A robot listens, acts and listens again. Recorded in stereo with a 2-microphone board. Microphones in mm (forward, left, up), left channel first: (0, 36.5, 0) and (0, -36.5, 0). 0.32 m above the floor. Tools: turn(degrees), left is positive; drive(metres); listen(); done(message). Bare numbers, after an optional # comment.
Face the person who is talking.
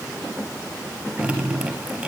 listen()
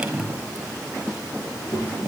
turn(90)
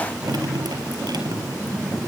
# So it is at 10° right.
turn(-10)
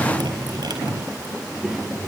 done("Found it: a child speaking, straight ahead, over 4 m away.")